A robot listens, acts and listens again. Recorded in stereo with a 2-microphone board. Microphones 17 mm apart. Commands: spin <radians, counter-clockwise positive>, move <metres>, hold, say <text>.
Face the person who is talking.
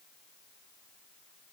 hold
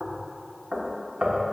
hold
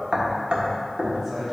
spin 0.52
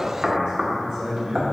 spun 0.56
spin -0.52
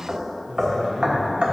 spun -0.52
say Found it: a man speaking, straight ahead.